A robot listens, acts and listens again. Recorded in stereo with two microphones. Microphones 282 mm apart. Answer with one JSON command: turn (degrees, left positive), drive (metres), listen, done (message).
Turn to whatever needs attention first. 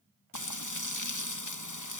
{"listen": true}
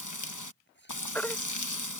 {"turn": 30}
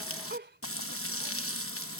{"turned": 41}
{"listen": true}
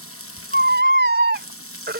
{"turn": -35}
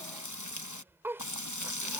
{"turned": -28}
{"turn": -10}
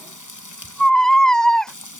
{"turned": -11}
{"done": "Found it: a baby crying, straight ahead."}